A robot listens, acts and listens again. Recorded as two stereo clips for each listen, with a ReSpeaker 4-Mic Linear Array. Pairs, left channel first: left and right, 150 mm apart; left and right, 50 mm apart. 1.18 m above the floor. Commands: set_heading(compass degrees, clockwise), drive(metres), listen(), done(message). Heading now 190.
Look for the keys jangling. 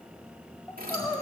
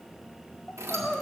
set_heading(280)
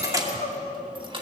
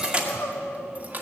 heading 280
set_heading(315)
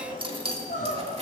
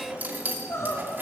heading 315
set_heading(5)
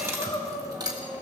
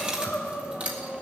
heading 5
set_heading(30)
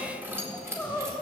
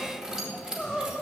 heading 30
set_heading(50)
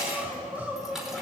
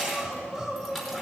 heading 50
done("Found it: keys jangling, straight ahead, 2 to 4 m away.")